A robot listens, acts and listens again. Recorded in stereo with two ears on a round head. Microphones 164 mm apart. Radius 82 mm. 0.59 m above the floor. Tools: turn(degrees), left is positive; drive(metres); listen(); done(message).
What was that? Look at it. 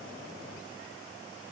listen()
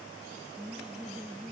turn(degrees=30)
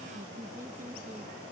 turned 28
listen()
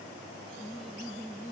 turn(degrees=30)
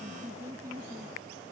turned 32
turn(degrees=-15)
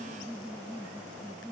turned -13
done("Found it: laughter, straight ahead.")